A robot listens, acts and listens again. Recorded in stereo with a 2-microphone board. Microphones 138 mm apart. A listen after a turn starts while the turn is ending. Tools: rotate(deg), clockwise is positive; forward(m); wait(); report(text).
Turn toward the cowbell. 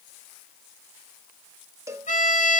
rotate(25)
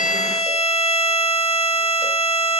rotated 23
wait()
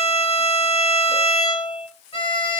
wait()
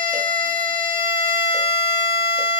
report("I heard a cowbell, but can't make it out now. It was about straight ahead or 135° right.")